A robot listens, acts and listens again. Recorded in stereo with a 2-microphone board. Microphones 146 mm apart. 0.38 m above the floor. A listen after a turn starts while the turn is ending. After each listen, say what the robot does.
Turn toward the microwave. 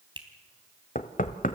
Keep listening.
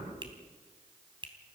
Keep listening.
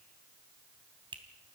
I can't make out a microwave to turn to.